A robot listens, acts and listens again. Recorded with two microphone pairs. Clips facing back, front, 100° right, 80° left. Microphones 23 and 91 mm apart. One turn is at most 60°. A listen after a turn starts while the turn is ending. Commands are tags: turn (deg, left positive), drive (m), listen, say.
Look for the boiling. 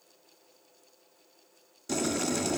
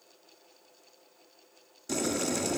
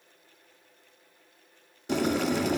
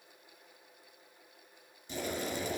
<turn deg="-60"/>
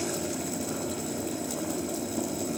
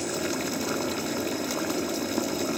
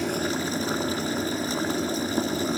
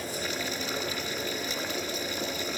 <turn deg="-50"/>
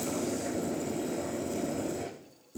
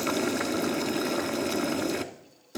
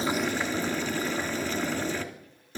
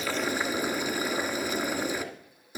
<say>Facing the boiling.</say>